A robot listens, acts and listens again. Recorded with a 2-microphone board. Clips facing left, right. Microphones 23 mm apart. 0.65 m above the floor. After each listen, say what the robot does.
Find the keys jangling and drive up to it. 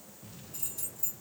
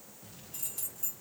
Turn 55° right.
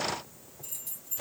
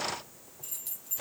Turn 70° right.
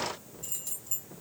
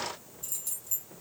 Drive 1.0 m forward.
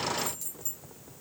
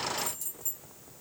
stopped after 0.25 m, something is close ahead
Turn 10° left.
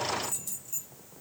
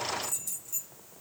Blocked. The keys jangling is further on, straight ahead.